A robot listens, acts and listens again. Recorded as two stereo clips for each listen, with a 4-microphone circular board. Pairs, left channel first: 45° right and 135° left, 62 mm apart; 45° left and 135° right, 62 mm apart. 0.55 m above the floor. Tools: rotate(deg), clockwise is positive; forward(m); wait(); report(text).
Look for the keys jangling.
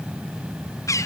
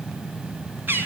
wait()
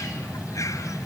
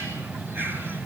wait()
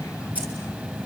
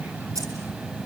rotate(160)
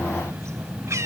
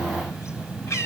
wait()
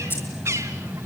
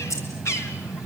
report("Facing the keys jangling, over 4 m away.")